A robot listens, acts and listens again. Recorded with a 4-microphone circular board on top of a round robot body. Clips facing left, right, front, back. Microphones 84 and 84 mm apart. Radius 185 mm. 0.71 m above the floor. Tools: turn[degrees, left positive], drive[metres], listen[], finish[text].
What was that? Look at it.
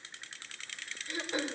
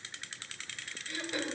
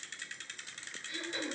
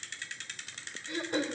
Thought: The throat clearing: 150° left.
Action: turn[150]
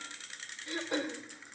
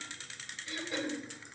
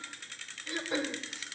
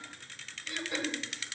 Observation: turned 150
Thought: The throat clearing is now 55° left.
Action: turn[55]
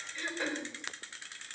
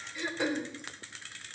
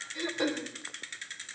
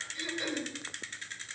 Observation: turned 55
Thought: The throat clearing is now 10° right.
Action: turn[-10]
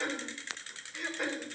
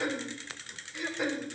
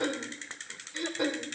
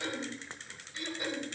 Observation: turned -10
Action: finish[Found it: throat clearing, straight ahead.]